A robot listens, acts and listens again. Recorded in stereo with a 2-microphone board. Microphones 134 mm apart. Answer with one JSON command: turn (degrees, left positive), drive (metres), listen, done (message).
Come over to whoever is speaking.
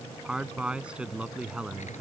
{"turn": -30}
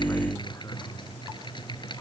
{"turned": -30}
{"listen": true}
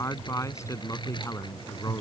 {"turn": 25}
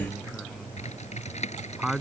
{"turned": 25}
{"drive": 1.0}
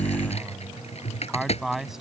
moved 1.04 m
{"drive": 1.0}
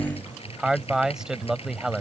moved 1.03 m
{"drive": 1.0}
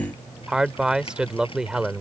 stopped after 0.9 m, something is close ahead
{"turn": -10}
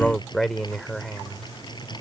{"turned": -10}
{"done": "I am next to the man speaking."}